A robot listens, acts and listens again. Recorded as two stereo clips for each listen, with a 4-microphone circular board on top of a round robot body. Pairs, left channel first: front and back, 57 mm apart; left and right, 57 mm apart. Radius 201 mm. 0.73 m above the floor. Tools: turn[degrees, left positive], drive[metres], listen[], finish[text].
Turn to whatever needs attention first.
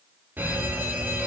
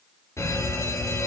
Thought: The fire alarm: 120° left.
Action: turn[120]
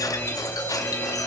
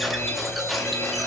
Thought: The fire alarm is now 55° left.
Action: turn[55]
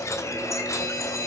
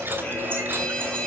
Thought: The fire alarm is now 20° left.
Action: turn[20]
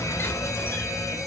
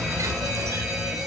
Action: finish[Facing the fire alarm, over 4 m away.]